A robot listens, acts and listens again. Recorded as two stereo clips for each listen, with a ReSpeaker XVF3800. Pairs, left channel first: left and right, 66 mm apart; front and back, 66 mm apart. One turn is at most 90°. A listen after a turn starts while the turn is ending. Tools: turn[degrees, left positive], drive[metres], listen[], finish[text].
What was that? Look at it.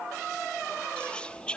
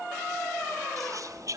Thought: The whispering: 160° left.
Action: turn[90]
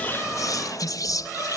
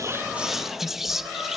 Thought: The whispering is now 95° left.
Action: turn[90]
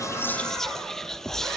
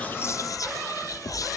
Action: finish[Found it: whispering, straight ahead, under 1 m away.]